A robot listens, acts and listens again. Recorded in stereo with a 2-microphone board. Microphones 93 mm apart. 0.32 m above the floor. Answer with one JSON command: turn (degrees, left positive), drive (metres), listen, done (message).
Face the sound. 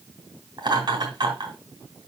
{"turn": -50}
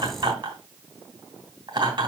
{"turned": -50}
{"turn": -70}
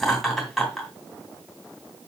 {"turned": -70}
{"done": "Found it: laughter, straight ahead."}